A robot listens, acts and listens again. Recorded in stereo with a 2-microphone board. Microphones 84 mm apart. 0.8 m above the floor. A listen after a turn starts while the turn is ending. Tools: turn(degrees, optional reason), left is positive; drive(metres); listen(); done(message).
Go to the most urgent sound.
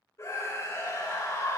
turn(degrees=40, reason="The scream: about 40° left or 140° left.")
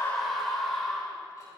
drive(metres=1.0)
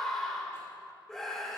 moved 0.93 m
drive(metres=1.0)
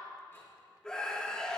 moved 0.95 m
turn(degrees=10, reason="The scream is now 10° left.")
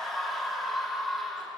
drive(metres=1.0)
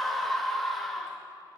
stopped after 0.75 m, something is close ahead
done("Arrived at the scream, straight ahead.")